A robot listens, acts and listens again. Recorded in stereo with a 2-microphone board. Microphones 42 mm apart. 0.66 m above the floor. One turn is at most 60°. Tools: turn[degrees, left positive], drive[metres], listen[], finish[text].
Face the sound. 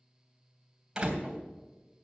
Thought: The door slam: about 15° right or 165° right.
Action: turn[-15]
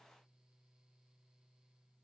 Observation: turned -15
Action: listen[]
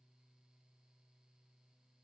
Action: finish[I heard a door slam, but can't make it out now. It was about straight ahead or 150° right.]